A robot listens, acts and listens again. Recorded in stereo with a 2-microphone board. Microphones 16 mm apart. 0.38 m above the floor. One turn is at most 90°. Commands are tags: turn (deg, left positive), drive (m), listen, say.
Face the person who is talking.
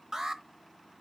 <listen/>
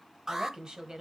<turn deg="-55"/>
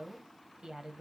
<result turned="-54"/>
<turn deg="-55"/>
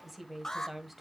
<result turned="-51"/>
<say>Found it: a woman speaking, straight ahead.</say>